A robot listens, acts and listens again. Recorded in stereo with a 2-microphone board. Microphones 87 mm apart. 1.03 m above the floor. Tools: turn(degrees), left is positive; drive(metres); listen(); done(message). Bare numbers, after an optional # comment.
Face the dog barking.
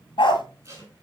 # The dog barking: about 70° left or 110° left.
turn(70)
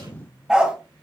# So it is at 10° right.
turn(-10)
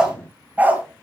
# The dog barking is now 25° right.
turn(-25)
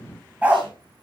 # The dog barking is now 20° right.
turn(-20)
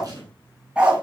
# The dog barking is now 15° right.
turn(-15)
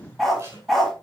done("Found it: a dog barking, straight ahead.")